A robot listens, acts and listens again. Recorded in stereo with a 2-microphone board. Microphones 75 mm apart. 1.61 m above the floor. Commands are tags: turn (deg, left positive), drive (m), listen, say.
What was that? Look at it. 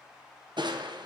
<turn deg="-75"/>
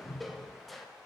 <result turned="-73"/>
<say>Found it: crushing, straight ahead.</say>